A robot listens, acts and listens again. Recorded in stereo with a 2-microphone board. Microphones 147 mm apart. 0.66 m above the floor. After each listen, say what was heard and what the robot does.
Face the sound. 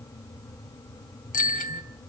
The bicycle bell: about 70° left or 110° left. Turn 70° left.
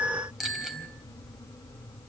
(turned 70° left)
Facing the bicycle bell, 2 to 4 m away.